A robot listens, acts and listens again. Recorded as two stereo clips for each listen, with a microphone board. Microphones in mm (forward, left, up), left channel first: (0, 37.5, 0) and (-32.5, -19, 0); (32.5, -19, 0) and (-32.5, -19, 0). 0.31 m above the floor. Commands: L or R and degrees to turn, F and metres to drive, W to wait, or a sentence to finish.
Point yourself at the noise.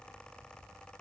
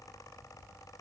W
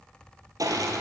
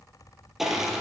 R95
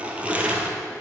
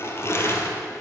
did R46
R50
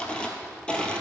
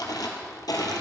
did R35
R15
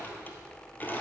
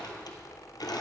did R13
Facing the crushing.